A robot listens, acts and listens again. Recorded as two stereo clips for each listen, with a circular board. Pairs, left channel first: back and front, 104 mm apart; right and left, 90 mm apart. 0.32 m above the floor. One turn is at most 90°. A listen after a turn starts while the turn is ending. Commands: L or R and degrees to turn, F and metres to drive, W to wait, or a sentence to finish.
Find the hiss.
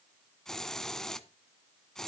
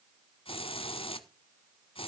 R90
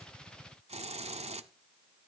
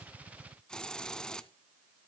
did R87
R10
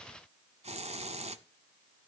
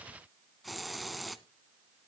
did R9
Facing the hiss, under 1 m away.